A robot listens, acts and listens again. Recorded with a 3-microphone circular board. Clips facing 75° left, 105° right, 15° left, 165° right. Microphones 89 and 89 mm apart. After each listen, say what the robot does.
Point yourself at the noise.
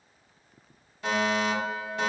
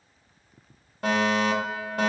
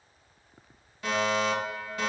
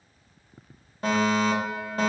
Turn 125° right.
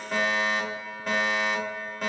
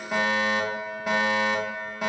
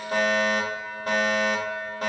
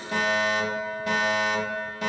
Turn 20° right.
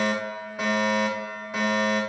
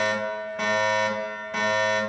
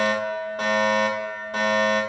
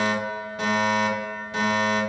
Facing the fire alarm, 2 to 4 m away.